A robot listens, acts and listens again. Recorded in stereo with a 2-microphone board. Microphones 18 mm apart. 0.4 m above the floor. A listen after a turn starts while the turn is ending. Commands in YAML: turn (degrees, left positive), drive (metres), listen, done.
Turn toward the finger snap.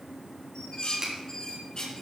turn: -40
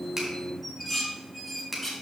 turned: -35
turn: -10
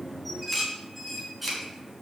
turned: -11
listen: true
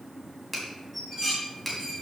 done: "Found it: a finger snap, straight ahead, 2 to 4 m away."